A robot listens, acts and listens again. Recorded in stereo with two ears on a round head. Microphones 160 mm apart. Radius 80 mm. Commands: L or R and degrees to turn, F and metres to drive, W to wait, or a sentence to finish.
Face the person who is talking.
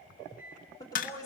L20
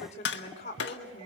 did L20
L140
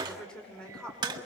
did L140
Facing the woman speaking, over 4 m away.